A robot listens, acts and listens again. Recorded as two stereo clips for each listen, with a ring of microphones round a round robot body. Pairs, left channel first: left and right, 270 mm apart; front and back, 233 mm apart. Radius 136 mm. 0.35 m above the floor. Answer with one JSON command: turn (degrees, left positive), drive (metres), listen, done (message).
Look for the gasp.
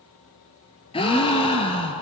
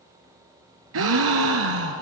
{"turn": 160}
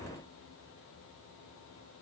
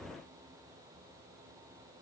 {"done": "I heard a gasp from this way, but can't make it out now."}